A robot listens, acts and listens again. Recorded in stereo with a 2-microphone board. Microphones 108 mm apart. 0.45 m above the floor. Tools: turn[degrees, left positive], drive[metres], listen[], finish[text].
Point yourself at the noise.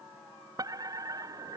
Thought: The fire alarm: about 35° right or 145° right.
Action: turn[-35]
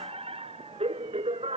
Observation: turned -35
Thought: So it is at 110° right.
Action: turn[-110]
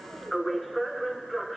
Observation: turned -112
Action: finish[Facing the fire alarm.]